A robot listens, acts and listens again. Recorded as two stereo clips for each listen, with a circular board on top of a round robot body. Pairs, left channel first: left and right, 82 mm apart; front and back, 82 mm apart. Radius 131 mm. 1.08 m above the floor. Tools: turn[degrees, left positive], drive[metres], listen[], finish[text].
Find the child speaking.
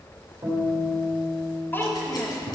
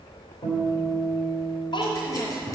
Thought: The child speaking: 30° left.
Action: turn[30]
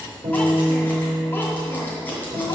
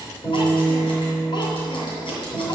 Action: listen[]
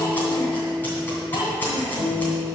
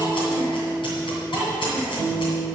Thought: The child speaking is now 55° left.
Action: turn[55]
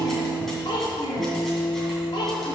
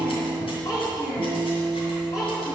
Thought: The child speaking is now 45° left.
Action: turn[45]
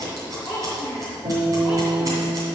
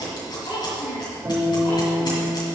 Action: finish[Facing the child speaking, 2 to 4 m away.]